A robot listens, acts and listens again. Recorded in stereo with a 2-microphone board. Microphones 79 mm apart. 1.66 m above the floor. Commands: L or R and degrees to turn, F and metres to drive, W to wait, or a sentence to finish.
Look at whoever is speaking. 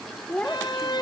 L30
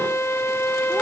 W
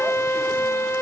W
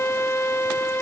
I heard a child speaking, but can't make it out now. It was about 15° right or 135° left.